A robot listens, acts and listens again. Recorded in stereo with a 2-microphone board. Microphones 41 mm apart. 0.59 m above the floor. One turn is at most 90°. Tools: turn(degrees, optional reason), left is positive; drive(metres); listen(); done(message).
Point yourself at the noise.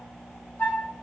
turn(degrees=30, reason="The flute: about 30° left or 150° left.")
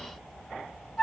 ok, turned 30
done("Facing the flute, 1 to 2 m away.")